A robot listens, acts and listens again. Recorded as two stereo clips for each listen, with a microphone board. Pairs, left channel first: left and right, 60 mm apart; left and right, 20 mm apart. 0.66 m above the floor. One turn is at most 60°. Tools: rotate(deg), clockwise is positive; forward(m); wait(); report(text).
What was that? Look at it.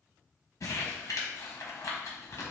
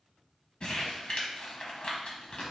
rotate(-60)
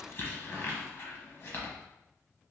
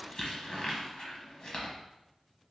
rotate(-45)
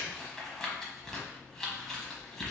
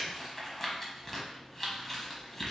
rotate(-10)
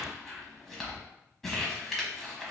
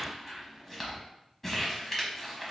report("Facing the crumpling.")